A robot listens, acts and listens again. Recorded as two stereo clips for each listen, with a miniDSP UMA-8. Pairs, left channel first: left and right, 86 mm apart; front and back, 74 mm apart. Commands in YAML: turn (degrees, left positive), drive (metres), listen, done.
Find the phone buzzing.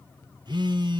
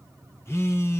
turn: -55
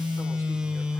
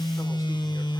turn: -10
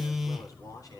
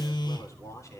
done: "Found it: a phone buzzing, straight ahead."